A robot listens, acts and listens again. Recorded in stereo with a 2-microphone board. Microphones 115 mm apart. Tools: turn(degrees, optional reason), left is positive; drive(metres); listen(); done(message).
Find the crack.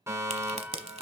turn(degrees=-70, reason="The crack: about 70° right or 110° right.")
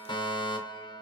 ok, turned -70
listen()
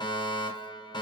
done("I heard a crack, but can't make it out now. It was about straight ahead or 40° right.")